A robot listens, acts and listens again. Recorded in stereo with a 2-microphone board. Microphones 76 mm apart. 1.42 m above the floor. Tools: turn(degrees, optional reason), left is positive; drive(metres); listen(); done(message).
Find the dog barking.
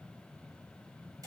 listen()
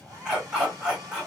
turn(degrees=-30)
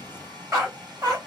turn(degrees=-130, reason="So it is at 130° right.")
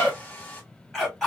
done("Found it: a dog barking, straight ahead.")